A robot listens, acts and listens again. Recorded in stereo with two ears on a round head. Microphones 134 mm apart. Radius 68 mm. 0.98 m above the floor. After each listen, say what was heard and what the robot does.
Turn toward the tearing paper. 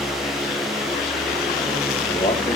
Keep listening.
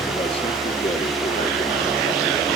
Keep listening.
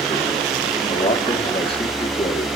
I can't make out tearing paper, only a man speaking.